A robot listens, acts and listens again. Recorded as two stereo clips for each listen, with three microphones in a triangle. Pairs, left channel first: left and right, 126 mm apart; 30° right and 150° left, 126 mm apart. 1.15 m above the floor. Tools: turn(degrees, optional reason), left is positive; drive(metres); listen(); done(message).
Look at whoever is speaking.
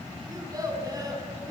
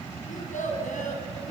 turn(degrees=-30, reason="The child speaking: 30° right.")
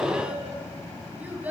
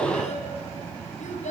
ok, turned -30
turn(degrees=-15, reason="The child speaking is now 15° right.")
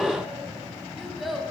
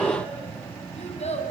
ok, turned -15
done("Found it: a child speaking, straight ahead.")